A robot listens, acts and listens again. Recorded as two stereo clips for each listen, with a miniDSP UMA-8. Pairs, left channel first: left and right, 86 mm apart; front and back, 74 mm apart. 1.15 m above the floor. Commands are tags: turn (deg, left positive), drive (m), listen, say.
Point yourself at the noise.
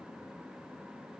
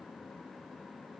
<listen/>
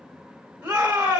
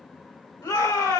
<turn deg="-20"/>
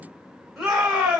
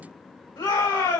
<say>Found it: a shout, straight ahead, 2 to 4 m away.</say>